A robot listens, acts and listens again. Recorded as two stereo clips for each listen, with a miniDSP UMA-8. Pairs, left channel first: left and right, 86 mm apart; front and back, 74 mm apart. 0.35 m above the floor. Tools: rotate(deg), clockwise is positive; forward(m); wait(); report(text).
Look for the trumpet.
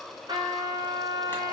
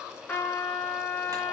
rotate(70)
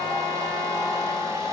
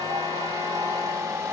wait()
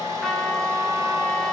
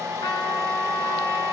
report("Facing the trumpet, 1 to 2 m away.")